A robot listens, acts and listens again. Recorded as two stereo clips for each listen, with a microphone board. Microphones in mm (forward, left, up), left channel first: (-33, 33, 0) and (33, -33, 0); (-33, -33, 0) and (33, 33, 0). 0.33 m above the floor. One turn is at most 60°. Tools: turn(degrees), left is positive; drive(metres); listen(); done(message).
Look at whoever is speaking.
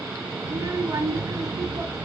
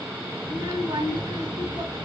turn(degrees=10)
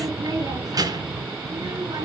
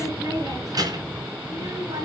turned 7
done("Facing the child speaking.")